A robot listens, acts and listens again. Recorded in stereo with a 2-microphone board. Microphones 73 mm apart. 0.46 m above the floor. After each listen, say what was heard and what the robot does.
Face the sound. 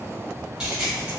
Turn 30° right.
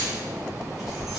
Keep listening.
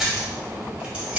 The keys jangling: about 20° right or 160° right. Turn 20° right.
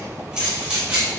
The keys jangling: about 20° right or 160° right. Turn 20° right.
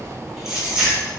The keys jangling: about 15° right or 165° right. Turn 15° right.
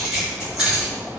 Turn 30° right.
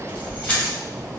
So it is at 20° left. Turn 20° left.
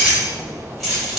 Facing the keys jangling, 1 to 2 m away.